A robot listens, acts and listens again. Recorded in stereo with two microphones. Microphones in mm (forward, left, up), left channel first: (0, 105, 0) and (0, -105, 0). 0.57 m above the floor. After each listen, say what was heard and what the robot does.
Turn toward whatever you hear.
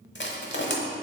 The crushing: about 60° left or 120° left. Turn 60° left.
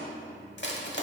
So it is at 60° left. Turn 60° left.
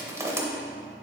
The crushing is now 15° right. Turn 15° right.
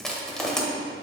Found it: crushing, straight ahead.